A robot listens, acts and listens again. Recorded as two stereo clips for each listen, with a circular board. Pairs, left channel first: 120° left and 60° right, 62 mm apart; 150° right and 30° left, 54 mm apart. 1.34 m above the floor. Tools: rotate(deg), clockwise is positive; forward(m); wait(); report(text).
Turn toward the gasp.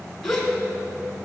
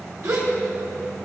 rotate(-35)
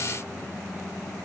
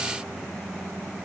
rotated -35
report("Facing where the gasp came from. I can't hear it now.")